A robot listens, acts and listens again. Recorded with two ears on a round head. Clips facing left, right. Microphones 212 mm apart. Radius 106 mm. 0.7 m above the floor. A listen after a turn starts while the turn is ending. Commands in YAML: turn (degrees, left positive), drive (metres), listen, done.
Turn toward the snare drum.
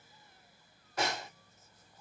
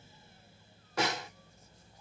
turn: -55
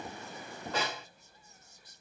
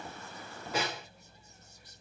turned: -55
turn: -10
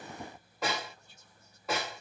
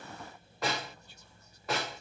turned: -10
done: "Facing the snare drum, 1 to 2 m away."